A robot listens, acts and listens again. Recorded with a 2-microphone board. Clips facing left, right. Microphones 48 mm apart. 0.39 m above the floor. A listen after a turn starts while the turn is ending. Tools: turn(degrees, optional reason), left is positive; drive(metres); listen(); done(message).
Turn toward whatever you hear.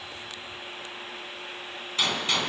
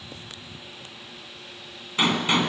turn(degrees=-25, reason="The gunshot: about 25° right or 155° right.")
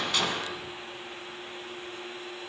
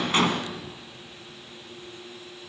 listen()
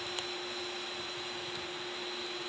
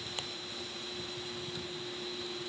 done("I heard a gunshot, but can't make it out now. It was about straight ahead or 130° right.")